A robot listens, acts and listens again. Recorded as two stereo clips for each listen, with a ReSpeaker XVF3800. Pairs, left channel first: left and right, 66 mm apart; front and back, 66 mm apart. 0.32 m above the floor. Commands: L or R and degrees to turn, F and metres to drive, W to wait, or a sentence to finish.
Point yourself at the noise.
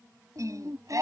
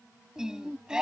R105
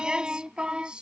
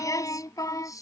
R15
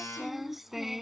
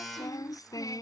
Facing the singing.